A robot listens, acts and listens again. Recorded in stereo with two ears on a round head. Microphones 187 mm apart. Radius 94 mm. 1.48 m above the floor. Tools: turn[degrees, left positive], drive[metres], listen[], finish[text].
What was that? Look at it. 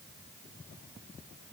Action: listen[]
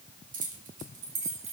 Thought: The keys jangling: about 35° right or 145° right.
Action: turn[-35]
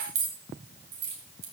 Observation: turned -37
Thought: So it is at 130° right.
Action: turn[-130]
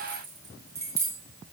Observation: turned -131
Thought: The keys jangling is now 15° right.
Action: turn[-15]
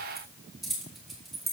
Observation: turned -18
Action: finish[Found it: keys jangling, straight ahead, 2 to 4 m away.]